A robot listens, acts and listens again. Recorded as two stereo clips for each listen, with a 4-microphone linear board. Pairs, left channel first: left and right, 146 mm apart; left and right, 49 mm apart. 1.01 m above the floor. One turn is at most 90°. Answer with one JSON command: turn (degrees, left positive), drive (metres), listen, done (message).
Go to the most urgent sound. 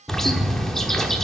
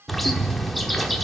{"listen": true}
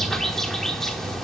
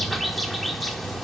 {"listen": true}
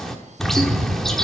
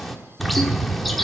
{"done": "I can't make out anything urgent, only a bird."}